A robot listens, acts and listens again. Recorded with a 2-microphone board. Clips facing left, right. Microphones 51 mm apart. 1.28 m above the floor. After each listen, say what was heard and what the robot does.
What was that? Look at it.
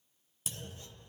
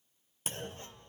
The clunk: about 40° right or 140° right. Turn 40° right.
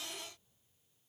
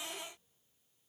Keep listening.
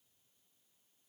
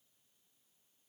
I heard a clunk, but can't make it out now. It was about straight ahead or 100° right.